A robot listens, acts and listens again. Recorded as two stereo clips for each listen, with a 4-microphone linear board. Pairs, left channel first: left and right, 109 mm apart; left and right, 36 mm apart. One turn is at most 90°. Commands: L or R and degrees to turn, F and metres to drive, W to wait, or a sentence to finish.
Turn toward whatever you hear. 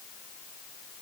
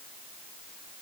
W
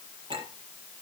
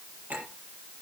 R45
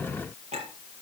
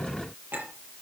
R90
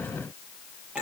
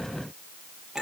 R10
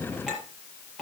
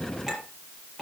Facing the clink, over 4 m away.